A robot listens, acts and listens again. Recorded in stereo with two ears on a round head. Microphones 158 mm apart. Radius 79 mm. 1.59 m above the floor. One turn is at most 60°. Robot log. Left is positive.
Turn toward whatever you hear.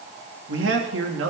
cmd yaw -60
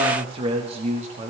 note: So it is at 40° right.
cmd yaw -40
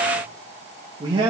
note: The man speaking is now 25° right.
cmd yaw -25
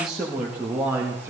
note: The man speaking is now 15° right.
cmd yaw -15
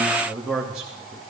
end: Facing the man speaking, 2 to 4 m away.